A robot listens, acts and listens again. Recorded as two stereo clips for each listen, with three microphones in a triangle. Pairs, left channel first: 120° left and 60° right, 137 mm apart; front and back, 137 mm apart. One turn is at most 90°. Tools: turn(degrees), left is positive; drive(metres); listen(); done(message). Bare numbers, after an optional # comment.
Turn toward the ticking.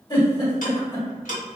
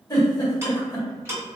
# The ticking: 110° left.
turn(90)
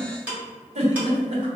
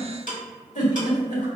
# The ticking is now 20° left.
turn(20)
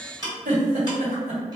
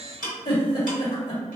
done("Found it: ticking, straight ahead.")